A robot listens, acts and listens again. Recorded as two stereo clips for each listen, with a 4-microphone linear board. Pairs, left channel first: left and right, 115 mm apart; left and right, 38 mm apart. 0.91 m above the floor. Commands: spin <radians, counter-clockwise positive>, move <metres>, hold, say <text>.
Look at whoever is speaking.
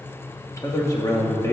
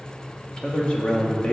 spin 0.44
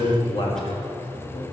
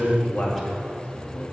spin 2.18
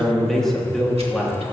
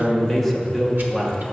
say Found it: a man speaking, straight ahead, 1 to 2 m away.